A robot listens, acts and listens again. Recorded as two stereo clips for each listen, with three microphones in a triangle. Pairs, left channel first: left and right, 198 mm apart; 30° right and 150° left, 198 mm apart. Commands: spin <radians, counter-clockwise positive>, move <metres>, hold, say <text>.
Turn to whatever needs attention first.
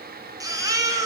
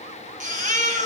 spin -2.79
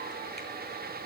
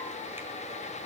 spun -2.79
hold
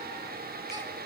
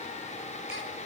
hold
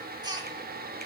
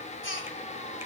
spin -0.35
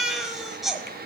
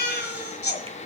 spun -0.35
say Found it: a baby crying, straight ahead, 1 to 2 m away.